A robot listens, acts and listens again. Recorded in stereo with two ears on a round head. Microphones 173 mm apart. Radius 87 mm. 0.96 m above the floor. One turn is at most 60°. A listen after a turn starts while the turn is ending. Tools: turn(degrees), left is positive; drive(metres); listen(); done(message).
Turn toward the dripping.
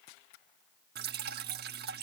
turn(degrees=-55)
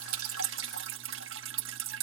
turn(degrees=-60)
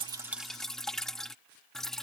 done("Found it: dripping, straight ahead.")